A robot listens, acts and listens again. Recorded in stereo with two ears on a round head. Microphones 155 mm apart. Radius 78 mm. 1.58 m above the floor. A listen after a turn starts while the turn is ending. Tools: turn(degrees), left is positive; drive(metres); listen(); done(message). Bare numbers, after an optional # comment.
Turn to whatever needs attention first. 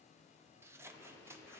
listen()
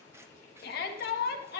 # The shout: about 55° left or 125° left.
turn(55)
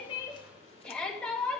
done("Found it: a shout, straight ahead, 2 to 4 m away.")